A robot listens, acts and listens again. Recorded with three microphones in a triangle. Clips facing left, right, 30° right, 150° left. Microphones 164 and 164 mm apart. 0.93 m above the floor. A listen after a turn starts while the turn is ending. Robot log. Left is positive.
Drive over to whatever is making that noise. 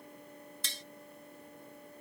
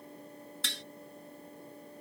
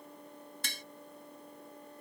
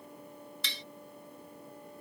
note: The tapping: 70° right.
cmd yaw -70
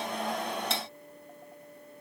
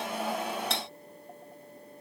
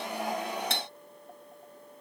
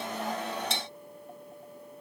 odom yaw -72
cmd fwd 1.0
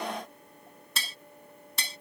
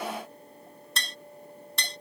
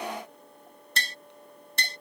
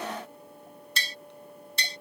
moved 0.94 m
cmd fwd 1.0
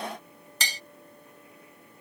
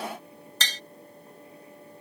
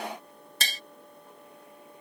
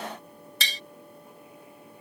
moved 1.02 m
note: The tapping is now 10° left.
cmd yaw +10
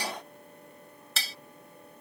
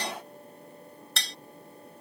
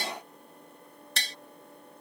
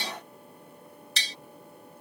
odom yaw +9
cmd fwd 1.0
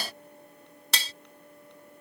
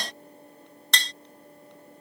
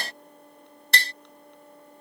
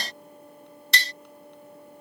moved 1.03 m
cmd fwd 1.0
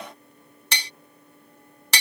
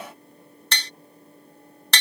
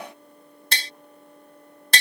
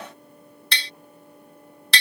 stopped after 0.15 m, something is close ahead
note: The tapping is now 10° left.
cmd yaw +10
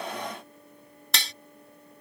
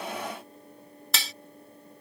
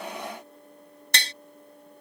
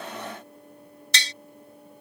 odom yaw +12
end: I am next to the tapping.